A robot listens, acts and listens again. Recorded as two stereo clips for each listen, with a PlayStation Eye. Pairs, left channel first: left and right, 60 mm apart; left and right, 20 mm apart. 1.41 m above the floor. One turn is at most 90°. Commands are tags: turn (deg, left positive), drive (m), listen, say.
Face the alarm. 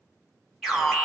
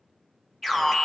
<turn deg="30"/>
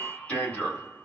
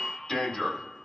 <turn deg="90"/>
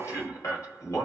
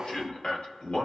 <turn deg="60"/>
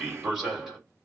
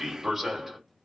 <turn deg="-10"/>
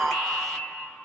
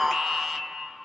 <say>Facing the alarm.</say>